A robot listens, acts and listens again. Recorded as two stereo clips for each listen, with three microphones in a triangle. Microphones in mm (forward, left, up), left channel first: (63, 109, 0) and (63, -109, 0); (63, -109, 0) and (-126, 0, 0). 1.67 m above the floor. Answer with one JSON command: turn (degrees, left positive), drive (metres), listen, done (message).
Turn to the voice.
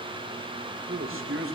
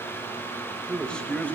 {"turn": -115}
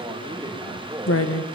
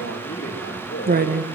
{"turn": -15}
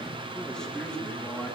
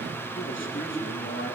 {"done": "Facing the man speaking, over 4 m away."}